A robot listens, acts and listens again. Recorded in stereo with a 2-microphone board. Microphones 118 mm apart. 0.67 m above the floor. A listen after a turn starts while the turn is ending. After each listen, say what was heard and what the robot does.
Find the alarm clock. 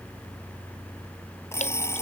The alarm clock: about 20° left or 160° left. Turn 20° left.
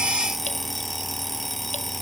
Facing the alarm clock.